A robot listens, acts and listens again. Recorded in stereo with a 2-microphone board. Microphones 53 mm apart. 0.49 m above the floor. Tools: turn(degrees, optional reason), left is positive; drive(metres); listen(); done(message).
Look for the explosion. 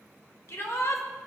listen()
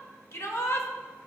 listen()
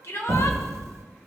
turn(degrees=-70, reason="The explosion: about 70° right or 110° right.")
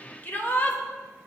listen()
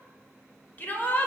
done("I heard an explosion, but can't make it out now. It was about straight ahead or 40° right.")